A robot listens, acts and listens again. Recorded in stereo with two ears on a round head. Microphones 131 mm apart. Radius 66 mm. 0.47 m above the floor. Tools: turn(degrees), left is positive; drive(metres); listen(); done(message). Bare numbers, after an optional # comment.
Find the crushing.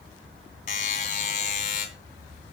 listen()
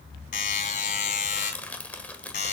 turn(30)
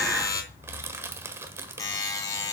# So it is at 20° right.
turn(-20)
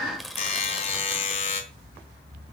done("Facing the crushing, 1 to 2 m away.")